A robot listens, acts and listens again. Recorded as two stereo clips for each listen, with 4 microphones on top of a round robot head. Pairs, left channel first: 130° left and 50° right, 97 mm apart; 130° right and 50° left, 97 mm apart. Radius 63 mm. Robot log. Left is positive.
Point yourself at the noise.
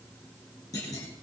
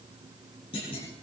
note: The clunk: 170° right.
cmd yaw -170
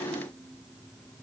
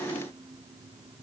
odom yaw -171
end: I heard a clunk from this way, but can't make it out now.